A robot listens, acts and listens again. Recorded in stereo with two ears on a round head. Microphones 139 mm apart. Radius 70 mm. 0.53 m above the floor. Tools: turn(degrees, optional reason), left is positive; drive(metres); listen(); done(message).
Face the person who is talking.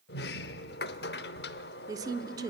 turn(degrees=-25, reason="The woman speaking: about 25° right or 155° right.")
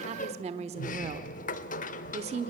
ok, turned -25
turn(degrees=-125, reason="So it is at 125° right.")
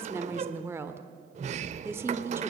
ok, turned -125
turn(degrees=-20, reason="The woman speaking is now 20° right.")
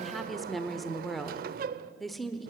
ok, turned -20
done("Facing the woman speaking.")